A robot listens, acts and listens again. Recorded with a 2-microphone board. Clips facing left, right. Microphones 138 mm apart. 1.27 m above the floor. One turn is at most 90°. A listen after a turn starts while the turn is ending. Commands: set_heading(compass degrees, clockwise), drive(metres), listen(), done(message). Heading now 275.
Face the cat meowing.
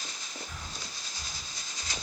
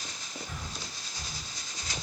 listen()
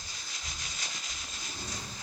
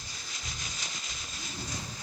set_heading(245)
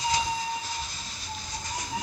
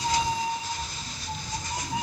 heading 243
set_heading(268)
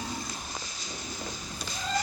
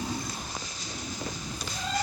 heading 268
done("Facing the cat meowing, over 4 m away.")